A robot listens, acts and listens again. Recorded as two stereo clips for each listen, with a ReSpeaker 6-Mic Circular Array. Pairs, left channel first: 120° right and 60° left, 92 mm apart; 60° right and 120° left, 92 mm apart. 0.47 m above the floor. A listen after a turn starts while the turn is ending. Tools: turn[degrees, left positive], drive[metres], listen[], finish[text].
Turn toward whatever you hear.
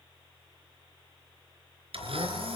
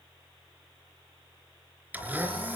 Thought: The blender: 50° left.
Action: turn[50]
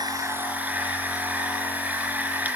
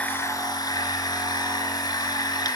Thought: The blender is now 15° right.
Action: turn[-15]
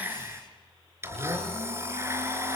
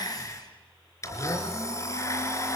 Action: finish[Found it: a blender, straight ahead.]